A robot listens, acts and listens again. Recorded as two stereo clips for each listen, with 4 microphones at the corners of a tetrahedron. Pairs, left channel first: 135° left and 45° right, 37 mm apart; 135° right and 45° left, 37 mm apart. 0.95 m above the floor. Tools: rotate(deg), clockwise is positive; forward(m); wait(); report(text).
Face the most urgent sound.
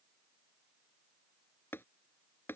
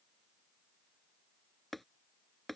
wait()
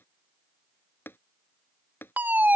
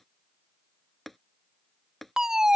rotate(25)
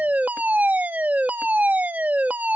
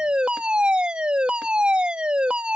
rotate(10)
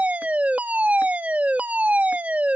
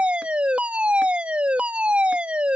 report("Facing the fire alarm.")